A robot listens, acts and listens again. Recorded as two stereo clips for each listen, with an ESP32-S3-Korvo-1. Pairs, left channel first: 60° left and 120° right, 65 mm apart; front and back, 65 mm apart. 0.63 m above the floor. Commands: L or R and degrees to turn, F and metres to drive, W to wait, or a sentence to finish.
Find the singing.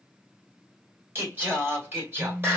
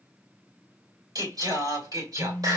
R170
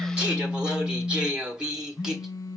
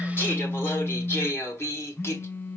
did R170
R45
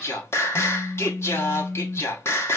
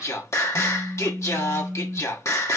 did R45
L25
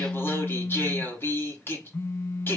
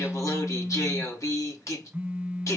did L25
L15
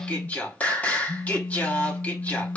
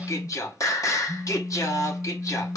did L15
Facing the singing, 1 to 2 m away.